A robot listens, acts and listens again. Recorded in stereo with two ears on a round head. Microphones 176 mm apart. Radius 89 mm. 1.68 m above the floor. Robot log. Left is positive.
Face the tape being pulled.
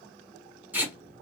cmd yaw -30
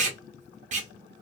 note: So it is at 140° right.
cmd yaw -140
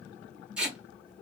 end: Found it: tape being pulled, straight ahead, under 1 m away.